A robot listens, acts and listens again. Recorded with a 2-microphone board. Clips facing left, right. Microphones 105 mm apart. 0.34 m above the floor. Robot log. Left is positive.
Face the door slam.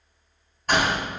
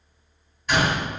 note: The door slam: about 50° left or 130° left.
cmd yaw +50
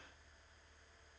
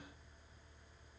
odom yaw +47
cmd idle
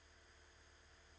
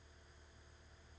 end: I heard a door slam, but can't make it out now. It was about straight ahead or 85° left.